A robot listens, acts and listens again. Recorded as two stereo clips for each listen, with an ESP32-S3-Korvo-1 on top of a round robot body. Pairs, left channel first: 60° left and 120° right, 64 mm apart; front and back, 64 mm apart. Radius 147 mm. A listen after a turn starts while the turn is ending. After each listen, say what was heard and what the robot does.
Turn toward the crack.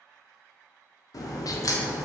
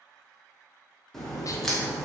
The crack: 85° left. Turn 85° left.
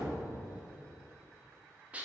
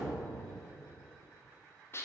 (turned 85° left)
Facing where the crack came from. I can't hear it now.